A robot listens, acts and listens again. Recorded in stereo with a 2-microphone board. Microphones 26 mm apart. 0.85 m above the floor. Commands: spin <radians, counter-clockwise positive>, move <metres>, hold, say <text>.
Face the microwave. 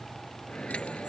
spin 0.79
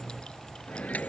spin 1.57
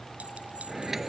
spin -0.17
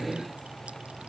say Found it: a microwave, straight ahead.